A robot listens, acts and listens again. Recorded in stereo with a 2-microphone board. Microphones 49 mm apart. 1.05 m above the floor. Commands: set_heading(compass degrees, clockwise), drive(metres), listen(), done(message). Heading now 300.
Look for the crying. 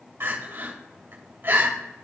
set_heading(355)
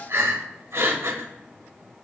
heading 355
set_heading(65)
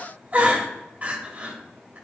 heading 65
set_heading(95)
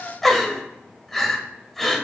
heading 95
done("Facing the crying.")